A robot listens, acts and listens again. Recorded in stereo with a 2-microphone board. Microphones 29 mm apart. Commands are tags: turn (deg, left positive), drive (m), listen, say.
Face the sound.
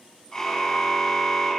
<turn deg="25"/>
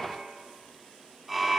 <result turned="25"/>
<say>Found it: a car horn, straight ahead.</say>